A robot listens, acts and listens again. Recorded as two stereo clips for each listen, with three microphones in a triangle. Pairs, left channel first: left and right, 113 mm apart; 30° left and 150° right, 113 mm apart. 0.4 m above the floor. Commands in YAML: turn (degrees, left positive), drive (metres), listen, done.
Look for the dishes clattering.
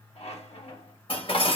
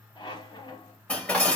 turn: 110
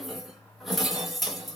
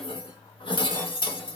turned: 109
done: "Found it: dishes clattering, straight ahead."